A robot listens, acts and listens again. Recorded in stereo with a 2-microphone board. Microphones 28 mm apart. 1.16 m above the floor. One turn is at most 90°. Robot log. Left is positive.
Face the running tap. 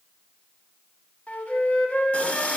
note: The running tap: about 40° left or 140° left.
cmd yaw +40
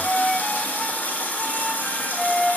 note: So it is at 95° left.
cmd yaw +90
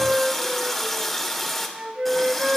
note: The running tap is now 10° left.
cmd yaw +10
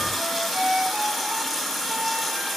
end: Found it: a running tap, straight ahead, 2 to 4 m away.